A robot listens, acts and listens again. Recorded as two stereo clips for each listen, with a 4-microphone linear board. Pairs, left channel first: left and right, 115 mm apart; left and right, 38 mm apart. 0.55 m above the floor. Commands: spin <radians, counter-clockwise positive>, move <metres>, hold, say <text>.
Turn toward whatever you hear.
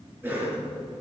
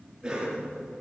spin -0.35
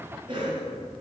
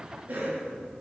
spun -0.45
spin -2.36
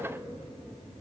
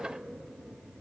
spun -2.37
hold
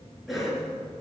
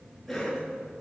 say Facing the cough, over 4 m away.